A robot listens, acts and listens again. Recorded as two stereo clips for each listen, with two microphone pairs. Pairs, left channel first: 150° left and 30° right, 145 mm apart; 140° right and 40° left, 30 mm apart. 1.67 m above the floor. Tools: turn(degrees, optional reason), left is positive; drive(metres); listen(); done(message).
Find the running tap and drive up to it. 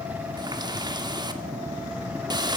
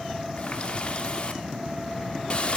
turn(degrees=-90, reason="The running tap: 90° right.")
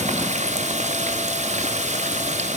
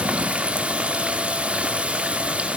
drive(metres=1.0)
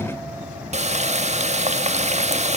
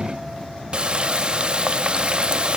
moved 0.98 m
drive(metres=1.0)
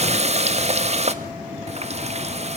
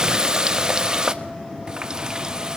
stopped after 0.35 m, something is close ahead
turn(degrees=-10, reason="The running tap is now 10° right.")
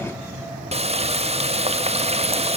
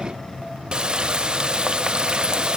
done("Arrived at the running tap, straight ahead.")